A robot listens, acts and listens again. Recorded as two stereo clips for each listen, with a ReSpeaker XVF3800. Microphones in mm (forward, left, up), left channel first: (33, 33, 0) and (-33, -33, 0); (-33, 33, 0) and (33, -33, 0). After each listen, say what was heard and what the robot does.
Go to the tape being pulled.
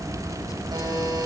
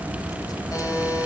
Keep listening.
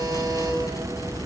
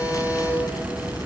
Keep listening.
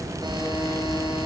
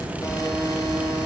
I can't make out tape being pulled to turn to.